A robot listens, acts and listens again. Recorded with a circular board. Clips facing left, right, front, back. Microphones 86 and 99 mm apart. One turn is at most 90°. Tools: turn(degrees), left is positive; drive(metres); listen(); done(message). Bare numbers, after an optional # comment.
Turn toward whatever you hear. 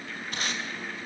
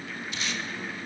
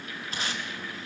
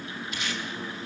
# The tape being pulled: 50° left.
turn(50)
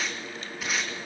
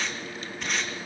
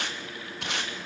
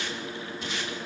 done("Facing the tape being pulled.")